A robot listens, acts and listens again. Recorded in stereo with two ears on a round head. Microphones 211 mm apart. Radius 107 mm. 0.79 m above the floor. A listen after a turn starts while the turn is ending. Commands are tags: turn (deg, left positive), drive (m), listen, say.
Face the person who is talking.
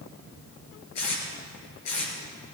<listen/>
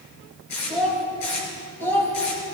<turn deg="30"/>
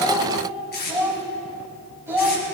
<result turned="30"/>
<turn deg="-10"/>
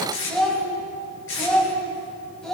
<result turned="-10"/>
<say>Found it: a child speaking, straight ahead, 2 to 4 m away.</say>